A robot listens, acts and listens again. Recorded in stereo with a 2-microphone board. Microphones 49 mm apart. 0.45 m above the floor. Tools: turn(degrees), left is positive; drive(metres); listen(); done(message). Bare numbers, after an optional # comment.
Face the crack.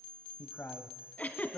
listen()
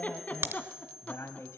# The crack: about 55° right or 125° right.
turn(-55)
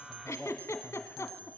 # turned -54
listen()
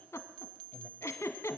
done("I heard a crack, but can't make it out now. It was about straight ahead or 70° right.")